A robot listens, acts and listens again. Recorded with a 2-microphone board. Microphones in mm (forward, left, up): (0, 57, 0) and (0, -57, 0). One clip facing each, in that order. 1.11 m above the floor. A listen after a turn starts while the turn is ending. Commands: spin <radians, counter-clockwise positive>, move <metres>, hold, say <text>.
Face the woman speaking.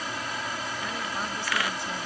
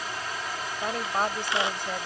spin -0.96
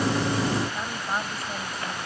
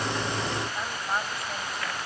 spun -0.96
say Facing the woman speaking.